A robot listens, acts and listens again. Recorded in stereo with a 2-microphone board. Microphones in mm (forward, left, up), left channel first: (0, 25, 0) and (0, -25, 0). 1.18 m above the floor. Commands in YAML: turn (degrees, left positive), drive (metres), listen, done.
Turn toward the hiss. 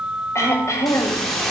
turn: 30
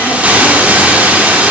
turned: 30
turn: -30
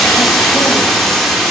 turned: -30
done: "Found it: a hiss, straight ahead."